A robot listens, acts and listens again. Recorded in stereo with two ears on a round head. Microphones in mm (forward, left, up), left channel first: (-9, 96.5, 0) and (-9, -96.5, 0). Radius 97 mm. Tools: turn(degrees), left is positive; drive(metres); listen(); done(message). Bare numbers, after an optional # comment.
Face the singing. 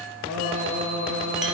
turn(-90)
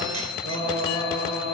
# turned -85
# So it is at 30° right.
turn(-30)
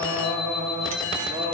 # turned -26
# The singing is now 15° right.
turn(-15)
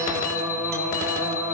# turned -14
done("Found it: singing, straight ahead.")